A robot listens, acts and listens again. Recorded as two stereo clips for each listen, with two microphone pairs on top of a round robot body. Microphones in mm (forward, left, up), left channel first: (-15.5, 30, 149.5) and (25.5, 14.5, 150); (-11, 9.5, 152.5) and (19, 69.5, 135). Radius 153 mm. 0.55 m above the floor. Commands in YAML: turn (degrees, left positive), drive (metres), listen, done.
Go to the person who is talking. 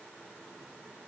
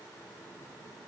listen: true
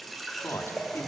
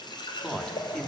turn: 155
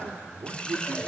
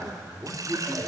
drive: 1.0
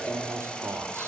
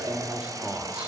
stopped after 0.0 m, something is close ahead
done: "Something is in my way. I am facing the man speaking but have not reached it."